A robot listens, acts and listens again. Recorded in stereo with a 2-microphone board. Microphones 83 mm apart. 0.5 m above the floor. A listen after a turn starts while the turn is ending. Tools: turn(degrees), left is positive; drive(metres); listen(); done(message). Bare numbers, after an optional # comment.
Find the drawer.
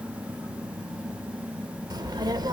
listen()
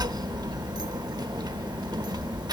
listen()
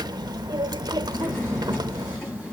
# The drawer: about 25° left or 155° left.
turn(25)
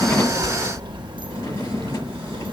listen()
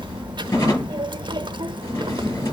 # So it is at 130° left.
turn(130)
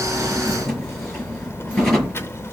done("Facing the drawer.")